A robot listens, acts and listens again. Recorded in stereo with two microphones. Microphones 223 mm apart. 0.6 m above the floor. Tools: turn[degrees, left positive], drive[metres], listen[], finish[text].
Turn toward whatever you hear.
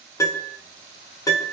Thought: The piano: about 15° left or 165° left.
Action: turn[15]
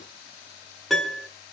Action: finish[Found it: a piano, straight ahead.]